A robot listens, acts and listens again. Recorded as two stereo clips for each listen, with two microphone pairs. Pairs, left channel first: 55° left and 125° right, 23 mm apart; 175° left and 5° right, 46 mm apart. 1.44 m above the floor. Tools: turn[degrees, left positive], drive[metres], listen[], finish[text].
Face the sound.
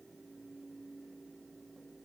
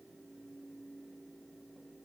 Action: listen[]
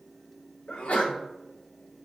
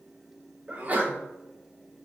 Thought: The sneeze: 55° left.
Action: turn[55]
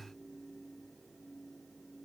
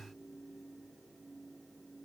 Action: finish[I heard a sneeze from this way, but can't make it out now.]